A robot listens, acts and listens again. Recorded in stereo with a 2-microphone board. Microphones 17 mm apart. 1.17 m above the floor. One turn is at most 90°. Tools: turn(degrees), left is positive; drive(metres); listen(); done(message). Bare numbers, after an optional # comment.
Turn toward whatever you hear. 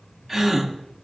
# The gasp: about 25° right or 155° right.
turn(-25)
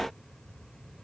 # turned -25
listen()
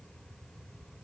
done("I heard a gasp, but can't make it out now. It was about straight ahead or 130° right.")